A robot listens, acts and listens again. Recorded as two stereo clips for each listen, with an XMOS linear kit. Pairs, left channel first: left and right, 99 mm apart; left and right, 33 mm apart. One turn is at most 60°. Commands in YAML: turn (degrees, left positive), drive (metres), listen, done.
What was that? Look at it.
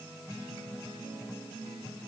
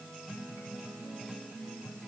listen: true
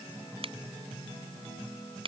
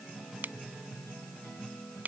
turn: -60
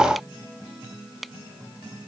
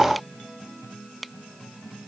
done: "Facing the finger snap."